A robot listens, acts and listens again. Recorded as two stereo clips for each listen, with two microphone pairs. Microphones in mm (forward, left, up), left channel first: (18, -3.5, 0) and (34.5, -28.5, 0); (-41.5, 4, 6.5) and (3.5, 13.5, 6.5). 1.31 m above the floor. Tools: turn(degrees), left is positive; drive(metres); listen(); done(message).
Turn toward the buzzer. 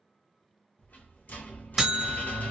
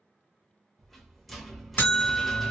turn(degrees=-130)
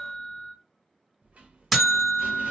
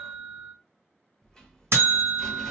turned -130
turn(degrees=30)
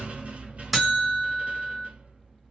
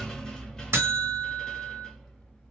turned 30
turn(degrees=30)
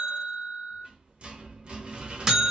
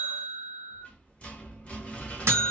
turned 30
turn(degrees=15)
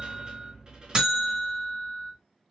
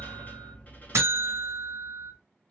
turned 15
done("Facing the buzzer, 1 to 2 m away.")